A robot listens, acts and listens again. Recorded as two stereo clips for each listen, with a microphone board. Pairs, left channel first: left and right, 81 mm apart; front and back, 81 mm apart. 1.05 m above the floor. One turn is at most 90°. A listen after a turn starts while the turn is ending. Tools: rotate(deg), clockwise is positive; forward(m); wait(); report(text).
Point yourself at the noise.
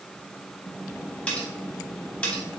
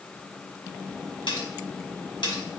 rotate(-15)
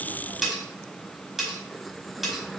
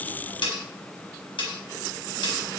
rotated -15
report("Found it: cutlery clinking, straight ahead, 1 to 2 m away.")